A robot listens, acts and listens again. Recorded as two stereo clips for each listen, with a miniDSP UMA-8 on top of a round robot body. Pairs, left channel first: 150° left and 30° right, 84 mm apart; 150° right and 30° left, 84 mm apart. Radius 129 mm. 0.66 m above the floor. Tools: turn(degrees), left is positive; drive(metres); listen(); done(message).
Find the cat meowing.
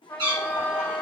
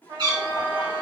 done("Found it: a cat meowing, straight ahead.")